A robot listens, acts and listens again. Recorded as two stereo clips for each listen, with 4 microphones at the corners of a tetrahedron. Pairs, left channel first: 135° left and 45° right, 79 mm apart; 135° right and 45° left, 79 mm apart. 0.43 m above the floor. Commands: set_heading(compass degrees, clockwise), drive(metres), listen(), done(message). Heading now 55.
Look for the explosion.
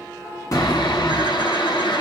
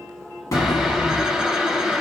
set_heading(235)
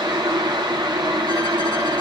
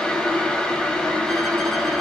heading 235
done("Facing where the explosion came from. I can't hear it now.")